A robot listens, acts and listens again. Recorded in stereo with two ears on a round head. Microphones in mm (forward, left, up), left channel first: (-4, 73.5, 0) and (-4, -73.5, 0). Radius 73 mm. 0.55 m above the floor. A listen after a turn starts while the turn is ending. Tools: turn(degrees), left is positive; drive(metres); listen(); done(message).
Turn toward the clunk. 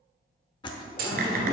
turn(degrees=-60)
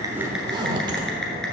listen()
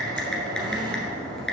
done("I heard a clunk, but can't make it out now. It was about straight ahead or 60° right.")